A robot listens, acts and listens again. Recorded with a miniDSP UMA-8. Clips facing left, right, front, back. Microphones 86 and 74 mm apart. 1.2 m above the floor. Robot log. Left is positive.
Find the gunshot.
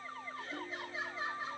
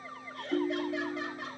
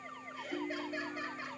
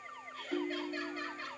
cmd idle
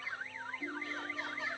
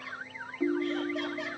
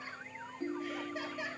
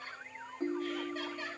cmd idle
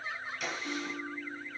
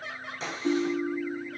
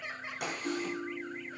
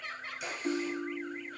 note: The gunshot: 30° right.
cmd yaw -30
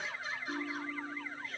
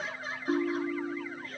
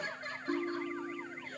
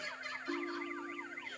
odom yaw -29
end: Facing where the gunshot came from. I can't hear it now.